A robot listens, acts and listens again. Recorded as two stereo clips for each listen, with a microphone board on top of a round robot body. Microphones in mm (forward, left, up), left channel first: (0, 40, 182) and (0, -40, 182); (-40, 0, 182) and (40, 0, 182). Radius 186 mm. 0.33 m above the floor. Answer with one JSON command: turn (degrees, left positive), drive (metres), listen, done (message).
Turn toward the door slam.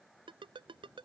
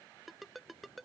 {"listen": true}
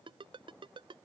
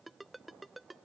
{"listen": true}
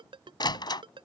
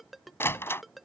{"turn": 120}
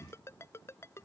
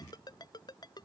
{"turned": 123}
{"done": "I heard a door slam from this way, but can't make it out now."}